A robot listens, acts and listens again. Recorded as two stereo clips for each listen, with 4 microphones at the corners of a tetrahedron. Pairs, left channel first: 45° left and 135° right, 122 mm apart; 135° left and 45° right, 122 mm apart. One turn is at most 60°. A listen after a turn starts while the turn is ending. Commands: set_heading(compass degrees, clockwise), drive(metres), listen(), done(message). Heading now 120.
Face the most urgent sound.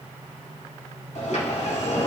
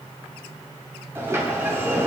listen()
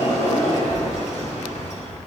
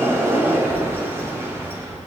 listen()
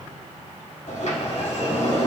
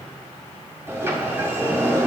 done("I can't make out anything urgent, only a sliding door.")